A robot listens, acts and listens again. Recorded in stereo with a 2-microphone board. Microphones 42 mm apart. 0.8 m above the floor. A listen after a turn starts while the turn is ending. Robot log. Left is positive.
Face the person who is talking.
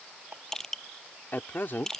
note: The man speaking: about 50° left or 130° left.
cmd yaw +50
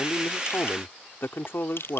note: So it is at 75° left.
cmd yaw +75
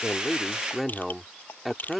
end: Facing the man speaking.